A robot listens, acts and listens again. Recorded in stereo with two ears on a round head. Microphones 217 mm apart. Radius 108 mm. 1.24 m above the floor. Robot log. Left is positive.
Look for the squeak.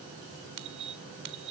note: The squeak: about 50° right or 130° right.
cmd yaw -50
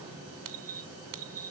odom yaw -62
note: So it is at 65° right.
cmd yaw -65
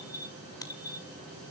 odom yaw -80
note: The squeak is now 15° left.
cmd yaw +15
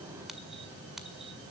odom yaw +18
cmd idle
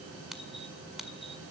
end: Facing the squeak.